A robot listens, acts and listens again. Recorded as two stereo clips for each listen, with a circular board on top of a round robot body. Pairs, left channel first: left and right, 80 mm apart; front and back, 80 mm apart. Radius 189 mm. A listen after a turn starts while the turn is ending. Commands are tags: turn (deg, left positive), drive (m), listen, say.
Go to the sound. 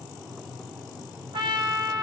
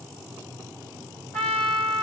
<turn deg="-80"/>
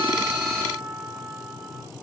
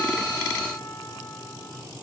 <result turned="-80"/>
<turn deg="-10"/>
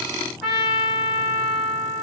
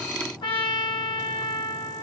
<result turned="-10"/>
<drive m="1.0"/>
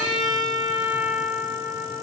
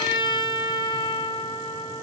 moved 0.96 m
<drive m="1.0"/>
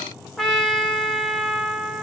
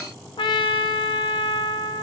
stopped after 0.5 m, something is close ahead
<say>Arrived at the trumpet, straight ahead.</say>